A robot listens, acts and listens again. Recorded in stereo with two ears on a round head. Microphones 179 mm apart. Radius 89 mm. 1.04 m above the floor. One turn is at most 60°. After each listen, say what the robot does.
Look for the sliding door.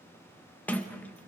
Turn 30° left.
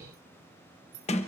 Turn 60° left.
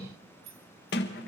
Turn 60° left.
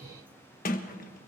Turn 50° left.
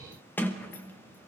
Turn 10° left.
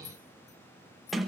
Found it: a sliding door, straight ahead.